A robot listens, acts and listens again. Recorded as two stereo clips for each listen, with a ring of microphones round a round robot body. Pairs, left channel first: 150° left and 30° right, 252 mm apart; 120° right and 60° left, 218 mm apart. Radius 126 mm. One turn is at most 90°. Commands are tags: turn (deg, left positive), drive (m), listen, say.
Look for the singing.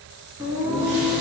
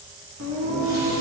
<turn deg="45"/>
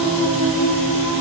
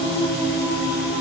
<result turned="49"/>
<turn deg="-10"/>
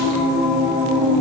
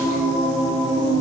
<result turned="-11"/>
<turn deg="-10"/>
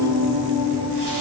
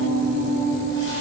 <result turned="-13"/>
<say>Found it: singing, straight ahead, 2 to 4 m away.</say>